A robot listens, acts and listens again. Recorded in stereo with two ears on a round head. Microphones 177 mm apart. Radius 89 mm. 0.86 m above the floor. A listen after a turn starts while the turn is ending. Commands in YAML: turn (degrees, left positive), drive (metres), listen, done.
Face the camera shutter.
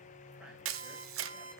turn: -90
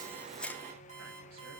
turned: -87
listen: true
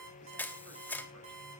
turn: 10
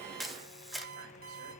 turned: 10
done: "Found it: a camera shutter, straight ahead, under 1 m away."